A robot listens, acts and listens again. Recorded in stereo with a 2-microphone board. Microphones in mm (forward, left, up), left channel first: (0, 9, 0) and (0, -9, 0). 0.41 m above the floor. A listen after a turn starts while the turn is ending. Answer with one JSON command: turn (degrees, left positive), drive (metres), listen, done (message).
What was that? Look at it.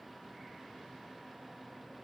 {"listen": true}
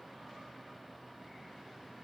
{"listen": true}
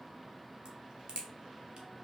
{"turn": -45}
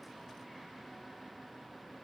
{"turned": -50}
{"listen": true}
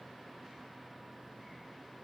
{"done": "I heard a crack, but can't make it out now. It was about 5° left or 85° right."}